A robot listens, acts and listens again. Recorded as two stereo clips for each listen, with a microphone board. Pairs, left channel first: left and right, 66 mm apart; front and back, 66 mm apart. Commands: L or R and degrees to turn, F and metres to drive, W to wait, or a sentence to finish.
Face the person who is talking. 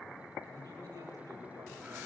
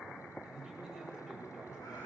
R85
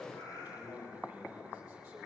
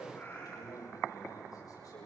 R15
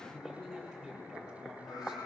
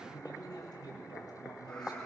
Facing the man speaking, over 4 m away.